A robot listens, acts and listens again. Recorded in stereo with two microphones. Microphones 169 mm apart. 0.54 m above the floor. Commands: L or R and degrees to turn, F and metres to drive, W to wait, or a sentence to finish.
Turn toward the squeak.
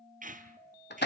R50
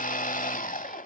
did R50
W
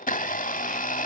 W
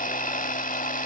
I heard a squeak, but can't make it out now. It was about straight ahead or 80° right.